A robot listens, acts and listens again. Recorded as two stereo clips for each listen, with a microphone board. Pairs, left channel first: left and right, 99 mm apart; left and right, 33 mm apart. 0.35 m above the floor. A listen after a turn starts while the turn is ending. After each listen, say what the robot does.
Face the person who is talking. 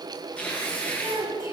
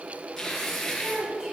Turn 35° right.
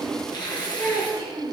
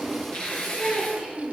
Facing the child speaking, over 4 m away.